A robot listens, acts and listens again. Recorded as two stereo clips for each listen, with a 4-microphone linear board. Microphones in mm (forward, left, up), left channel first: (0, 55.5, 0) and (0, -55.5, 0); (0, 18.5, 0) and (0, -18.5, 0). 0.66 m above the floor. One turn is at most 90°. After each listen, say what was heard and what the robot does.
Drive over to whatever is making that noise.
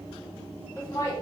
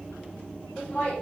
The laughter: about 30° left or 150° left. Turn 30° left.
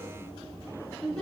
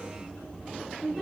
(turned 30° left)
Drive 1.0 m forward.
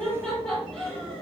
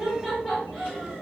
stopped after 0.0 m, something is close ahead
Something is in my way. I am facing the laughter but have not reached it.